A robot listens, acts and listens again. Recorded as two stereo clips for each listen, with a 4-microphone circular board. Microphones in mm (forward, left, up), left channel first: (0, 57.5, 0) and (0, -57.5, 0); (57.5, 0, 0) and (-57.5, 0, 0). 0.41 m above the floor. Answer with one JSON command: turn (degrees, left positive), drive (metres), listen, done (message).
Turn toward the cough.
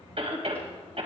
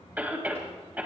{"turn": -105}
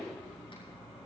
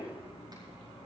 {"listen": true}
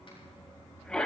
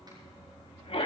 {"turn": 10}
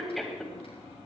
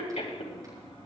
{"done": "Facing the cough, 2 to 4 m away."}